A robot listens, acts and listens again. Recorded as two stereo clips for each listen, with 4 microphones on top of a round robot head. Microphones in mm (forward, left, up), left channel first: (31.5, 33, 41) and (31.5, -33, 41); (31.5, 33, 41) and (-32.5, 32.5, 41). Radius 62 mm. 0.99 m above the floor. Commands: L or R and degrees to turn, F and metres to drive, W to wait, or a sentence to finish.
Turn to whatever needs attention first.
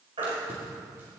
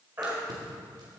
R110
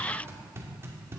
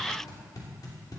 W
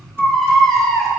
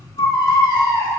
Found it: a baby crying, straight ahead.